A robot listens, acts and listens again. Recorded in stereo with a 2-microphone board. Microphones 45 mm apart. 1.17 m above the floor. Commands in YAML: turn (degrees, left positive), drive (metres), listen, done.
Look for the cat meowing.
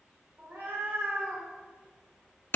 turn: -60
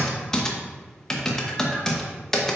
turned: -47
listen: true
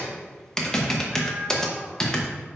turn: -40
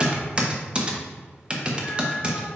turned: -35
listen: true
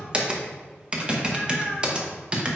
done: "Facing the cat meowing, over 4 m away."